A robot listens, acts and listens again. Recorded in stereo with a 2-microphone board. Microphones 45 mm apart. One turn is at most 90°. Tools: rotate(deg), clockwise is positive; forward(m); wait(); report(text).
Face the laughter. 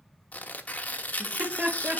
rotate(30)
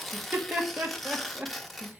rotate(30)
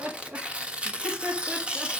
rotate(40)
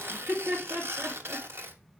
rotate(90)
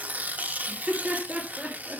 rotate(20)
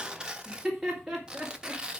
report("Facing the laughter.")